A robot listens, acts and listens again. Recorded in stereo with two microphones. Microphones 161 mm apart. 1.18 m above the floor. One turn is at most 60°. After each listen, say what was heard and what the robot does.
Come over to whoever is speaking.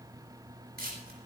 Keep listening.
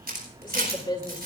The woman speaking: about 25° left or 155° left. Turn 25° left.
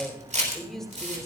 Drive 1.0 m forward.
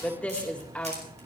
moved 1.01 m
The woman speaking is now 10° left. Turn 10° left.
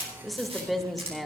Drive 1.0 m forward.
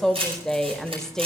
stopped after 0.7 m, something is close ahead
Arrived at the woman speaking, straight ahead.